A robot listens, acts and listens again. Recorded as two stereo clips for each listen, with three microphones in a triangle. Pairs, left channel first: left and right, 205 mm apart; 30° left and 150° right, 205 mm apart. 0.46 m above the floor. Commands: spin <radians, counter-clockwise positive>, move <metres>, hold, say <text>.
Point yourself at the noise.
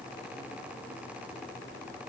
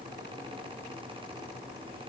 hold
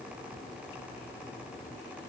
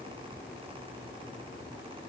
hold
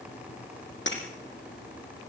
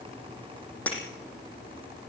spin 1.92
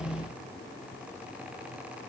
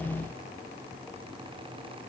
say I heard breaking glass from this way, but can't make it out now.